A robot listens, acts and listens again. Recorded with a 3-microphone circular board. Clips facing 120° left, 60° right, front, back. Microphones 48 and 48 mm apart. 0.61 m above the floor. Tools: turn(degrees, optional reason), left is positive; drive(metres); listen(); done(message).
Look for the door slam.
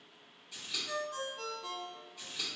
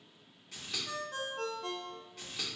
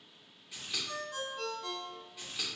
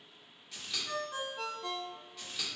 listen()
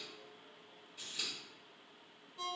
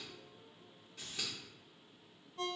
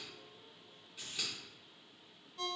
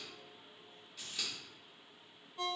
listen()
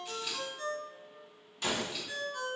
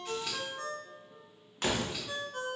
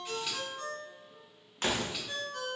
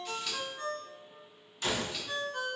turn(degrees=-30, reason="The door slam: 30° right.")
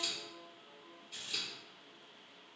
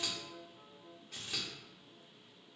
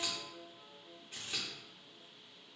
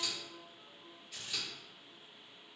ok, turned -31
done("I heard a door slam from this way, but can't make it out now.")